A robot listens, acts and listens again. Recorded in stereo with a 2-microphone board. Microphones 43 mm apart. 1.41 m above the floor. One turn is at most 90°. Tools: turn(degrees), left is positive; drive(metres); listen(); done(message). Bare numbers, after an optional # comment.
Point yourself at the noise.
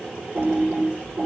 # The typing on a keyboard: about 65° right or 115° right.
turn(-65)
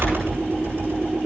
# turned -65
# So it is at 55° right.
turn(-55)
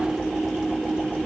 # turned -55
done("Found it: typing on a keyboard, straight ahead.")